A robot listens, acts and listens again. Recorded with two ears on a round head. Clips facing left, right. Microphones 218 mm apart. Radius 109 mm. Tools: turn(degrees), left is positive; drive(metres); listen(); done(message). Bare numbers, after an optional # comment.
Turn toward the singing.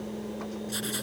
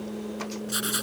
listen()
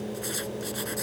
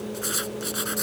listen()
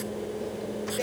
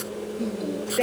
turn(-90)
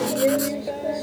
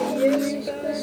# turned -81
# So it is at 15° right.
turn(-15)
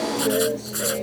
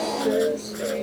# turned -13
done("Facing the singing.")